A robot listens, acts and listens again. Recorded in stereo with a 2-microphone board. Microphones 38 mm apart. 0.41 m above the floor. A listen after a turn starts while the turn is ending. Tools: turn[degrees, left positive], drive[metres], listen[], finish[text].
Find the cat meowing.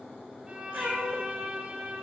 Thought: The cat meowing: about 65° right or 115° right.
Action: turn[-65]
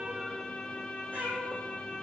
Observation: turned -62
Thought: So it is at 55° right.
Action: turn[-55]
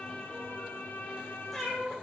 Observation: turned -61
Action: finish[Found it: a cat meowing, straight ahead, 2 to 4 m away.]